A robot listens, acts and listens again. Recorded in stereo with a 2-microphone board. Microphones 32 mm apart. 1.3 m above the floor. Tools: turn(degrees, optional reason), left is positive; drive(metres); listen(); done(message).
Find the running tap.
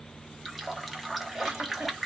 turn(degrees=-30)
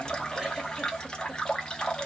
turn(degrees=30, reason="So it is at 30° left.")
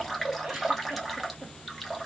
done("Found it: a running tap, straight ahead.")